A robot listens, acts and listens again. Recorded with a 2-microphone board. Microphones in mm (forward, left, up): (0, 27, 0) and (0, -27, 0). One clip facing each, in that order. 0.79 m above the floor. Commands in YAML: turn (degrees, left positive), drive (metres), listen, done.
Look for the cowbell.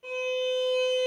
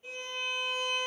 listen: true
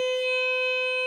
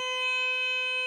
listen: true
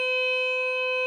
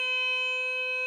done: "I can't make out a cowbell to turn to."